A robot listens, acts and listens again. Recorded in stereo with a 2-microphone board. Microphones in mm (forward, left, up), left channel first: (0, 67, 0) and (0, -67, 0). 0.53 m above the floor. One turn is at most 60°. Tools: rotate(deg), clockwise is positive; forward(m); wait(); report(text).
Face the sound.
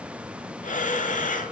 rotate(-60)
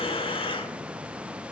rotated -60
rotate(-40)
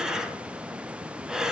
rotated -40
report("Facing the breathing.")